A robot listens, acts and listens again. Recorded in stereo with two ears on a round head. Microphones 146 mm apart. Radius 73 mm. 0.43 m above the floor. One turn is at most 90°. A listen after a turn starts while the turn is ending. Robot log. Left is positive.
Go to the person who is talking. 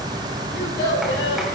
note: The child speaking: about 65° left or 115° left.
cmd yaw +65
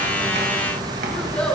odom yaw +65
note: So it is at 10° left.
cmd yaw +10
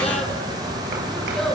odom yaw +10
cmd fwd 1.0
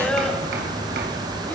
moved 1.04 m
note: The child speaking is now 10° left.
cmd yaw +10
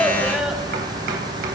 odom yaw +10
cmd fwd 1.0
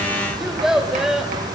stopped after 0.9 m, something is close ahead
end: I am next to the child speaking.